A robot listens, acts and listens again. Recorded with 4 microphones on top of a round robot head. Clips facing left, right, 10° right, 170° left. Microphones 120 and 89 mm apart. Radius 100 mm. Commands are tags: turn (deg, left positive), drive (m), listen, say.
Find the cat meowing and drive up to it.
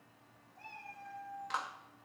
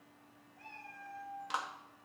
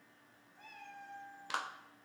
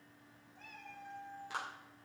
<turn deg="35"/>
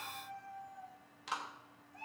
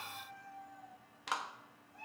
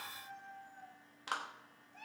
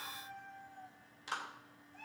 <drive m="1.0"/>
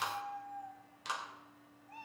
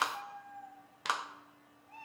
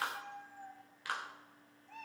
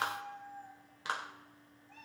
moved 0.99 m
<drive m="1.0"/>
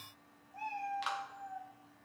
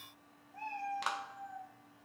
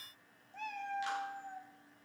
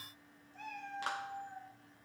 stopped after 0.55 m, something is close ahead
<turn deg="15"/>
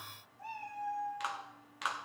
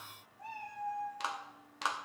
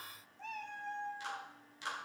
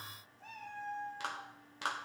<say>Arrived at the cat meowing, straight ahead.</say>